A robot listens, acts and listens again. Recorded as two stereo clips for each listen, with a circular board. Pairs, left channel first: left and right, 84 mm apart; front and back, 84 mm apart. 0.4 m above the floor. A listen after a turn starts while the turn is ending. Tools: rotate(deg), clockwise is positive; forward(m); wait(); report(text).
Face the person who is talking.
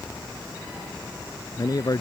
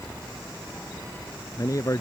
rotate(-50)
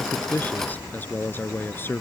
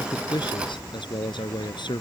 rotate(-25)
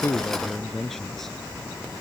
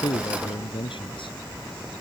report("Found it: a man speaking, straight ahead.")